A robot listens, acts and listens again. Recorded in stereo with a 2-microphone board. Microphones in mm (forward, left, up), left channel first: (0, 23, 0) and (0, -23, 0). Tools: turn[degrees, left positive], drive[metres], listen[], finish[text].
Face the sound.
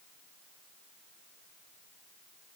Action: listen[]
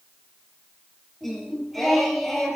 Action: turn[-30]
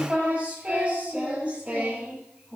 Thought: So it is at 145° right.
Action: turn[-145]
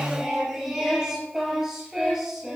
Thought: The singing is now 10° right.
Action: turn[-10]
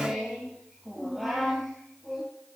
Action: finish[Facing the singing.]